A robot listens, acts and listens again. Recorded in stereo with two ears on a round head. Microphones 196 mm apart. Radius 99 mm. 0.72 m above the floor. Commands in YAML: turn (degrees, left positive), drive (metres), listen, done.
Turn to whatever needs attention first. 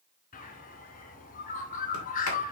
listen: true
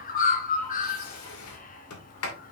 listen: true
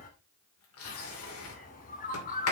done: "I can't make out anything urgent, only a sliding door and a bird."